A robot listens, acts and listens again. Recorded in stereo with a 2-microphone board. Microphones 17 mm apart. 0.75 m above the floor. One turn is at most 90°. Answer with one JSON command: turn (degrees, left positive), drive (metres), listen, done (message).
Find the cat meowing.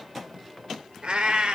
{"turn": -90}
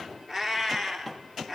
{"turn": 25}
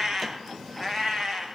{"turn": 15}
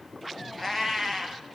{"turn": 10}
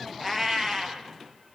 {"done": "Found it: a cat meowing, straight ahead, 2 to 4 m away."}